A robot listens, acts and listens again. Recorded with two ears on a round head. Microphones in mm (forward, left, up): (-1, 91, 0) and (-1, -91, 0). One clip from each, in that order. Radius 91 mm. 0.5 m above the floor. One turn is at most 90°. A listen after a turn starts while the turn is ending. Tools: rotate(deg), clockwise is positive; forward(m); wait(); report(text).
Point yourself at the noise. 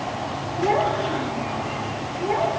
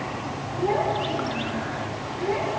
rotate(-20)
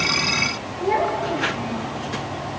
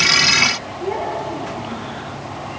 rotate(-35)
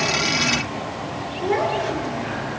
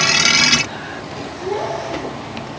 rotate(-90)
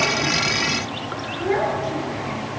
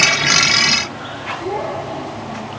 rotate(-55)
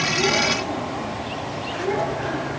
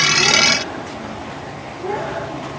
rotate(-15)
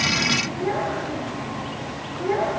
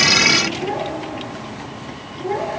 report("Facing the child speaking, over 4 m away.")